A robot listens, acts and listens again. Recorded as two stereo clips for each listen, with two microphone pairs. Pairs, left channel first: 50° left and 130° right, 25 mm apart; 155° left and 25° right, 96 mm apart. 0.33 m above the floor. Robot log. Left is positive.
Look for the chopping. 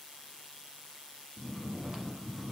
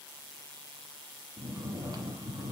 cmd idle
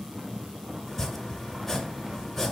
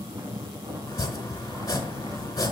note: The chopping: 115° left.
cmd yaw +115
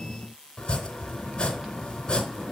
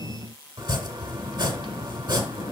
end: Facing the chopping, 1 to 2 m away.